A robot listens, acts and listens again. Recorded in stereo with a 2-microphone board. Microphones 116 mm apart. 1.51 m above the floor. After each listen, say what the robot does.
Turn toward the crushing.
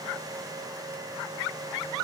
Keep listening.
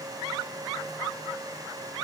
Keep listening.
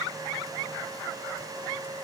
I can't make out crushing to turn to.